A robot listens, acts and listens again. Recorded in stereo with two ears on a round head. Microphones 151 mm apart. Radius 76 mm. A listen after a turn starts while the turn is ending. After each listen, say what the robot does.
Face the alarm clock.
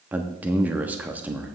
Keep listening.
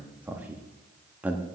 Keep listening.
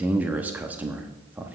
I can't make out an alarm clock, only a man speaking.